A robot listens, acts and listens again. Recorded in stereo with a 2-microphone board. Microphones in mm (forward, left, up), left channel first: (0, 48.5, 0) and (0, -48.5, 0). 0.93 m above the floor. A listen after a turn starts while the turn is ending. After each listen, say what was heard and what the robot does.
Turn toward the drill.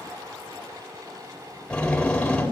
Turn 30° left.
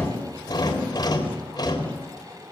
So it is at 135° left. Turn 135° left.
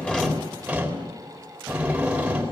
The drill is now 10° right. Turn 10° right.
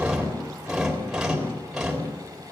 Found it: a drill, straight ahead.